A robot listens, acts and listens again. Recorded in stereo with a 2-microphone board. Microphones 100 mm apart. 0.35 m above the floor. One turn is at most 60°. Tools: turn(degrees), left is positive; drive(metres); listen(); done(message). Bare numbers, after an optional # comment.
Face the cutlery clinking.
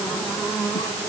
listen()
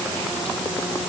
listen()
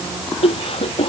done("I can't make out cutlery clinking to turn to.")